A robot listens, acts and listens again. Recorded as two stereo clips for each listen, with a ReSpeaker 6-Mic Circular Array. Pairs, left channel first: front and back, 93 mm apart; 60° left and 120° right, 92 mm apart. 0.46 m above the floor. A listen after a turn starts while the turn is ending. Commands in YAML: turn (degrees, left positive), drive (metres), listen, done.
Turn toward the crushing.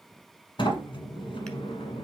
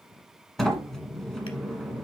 listen: true
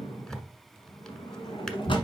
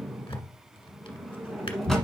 listen: true
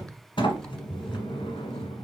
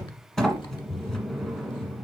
done: "I can't make out crushing to turn to."